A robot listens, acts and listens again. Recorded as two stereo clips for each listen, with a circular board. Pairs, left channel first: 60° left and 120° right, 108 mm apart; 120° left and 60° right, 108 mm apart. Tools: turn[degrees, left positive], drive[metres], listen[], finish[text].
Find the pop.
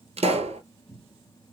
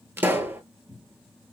Thought: The pop: 130° right.
Action: turn[-130]
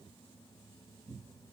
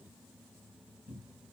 Action: finish[I heard a pop from this way, but can't make it out now.]